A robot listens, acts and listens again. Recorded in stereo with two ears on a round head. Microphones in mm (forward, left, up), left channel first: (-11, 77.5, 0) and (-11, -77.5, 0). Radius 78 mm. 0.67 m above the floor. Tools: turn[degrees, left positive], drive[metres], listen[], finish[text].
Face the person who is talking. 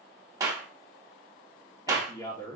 Thought: The man speaking: about 20° left or 160° left.
Action: turn[20]
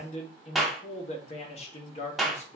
Thought: So it is at 135° left.
Action: turn[135]
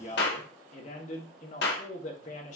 Thought: The man speaking is now 50° left.
Action: turn[50]
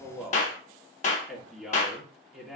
Action: finish[Facing the man speaking.]